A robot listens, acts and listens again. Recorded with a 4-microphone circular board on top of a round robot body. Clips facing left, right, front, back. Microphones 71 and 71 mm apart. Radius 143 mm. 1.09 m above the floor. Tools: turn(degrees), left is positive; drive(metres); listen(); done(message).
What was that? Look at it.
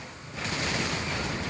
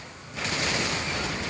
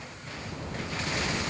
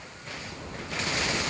listen()
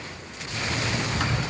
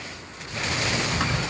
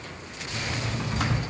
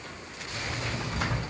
turn(degrees=-15)
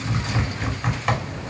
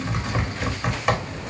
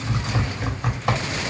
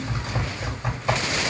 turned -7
done("Facing the typing on a keyboard.")